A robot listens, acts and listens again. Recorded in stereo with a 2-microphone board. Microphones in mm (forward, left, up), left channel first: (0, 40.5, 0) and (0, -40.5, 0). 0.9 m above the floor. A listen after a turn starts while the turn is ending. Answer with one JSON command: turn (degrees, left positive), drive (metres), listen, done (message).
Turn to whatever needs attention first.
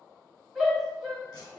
{"turn": 30}
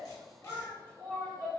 {"turn": 150}
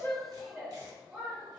{"turn": -10}
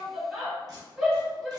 {"done": "Facing the shout."}